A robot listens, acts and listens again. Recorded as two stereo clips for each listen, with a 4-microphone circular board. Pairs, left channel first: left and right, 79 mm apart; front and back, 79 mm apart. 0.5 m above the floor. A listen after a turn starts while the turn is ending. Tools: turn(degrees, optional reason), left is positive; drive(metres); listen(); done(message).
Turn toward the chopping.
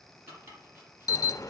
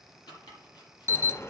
turn(degrees=-30, reason="The chopping: 30° right.")
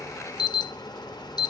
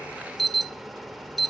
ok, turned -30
listen()
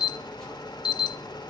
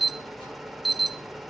listen()
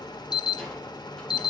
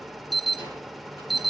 done("Facing where the chopping came from. I can't hear it now.")